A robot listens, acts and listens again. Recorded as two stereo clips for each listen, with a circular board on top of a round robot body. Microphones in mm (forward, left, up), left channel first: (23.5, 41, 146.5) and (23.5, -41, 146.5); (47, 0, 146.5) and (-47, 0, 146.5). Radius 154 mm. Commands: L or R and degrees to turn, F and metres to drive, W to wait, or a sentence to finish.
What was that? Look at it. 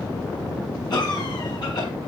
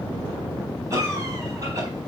L125
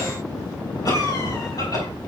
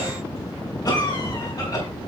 L45
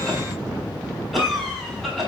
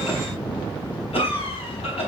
Found it: a cough, straight ahead, over 4 m away.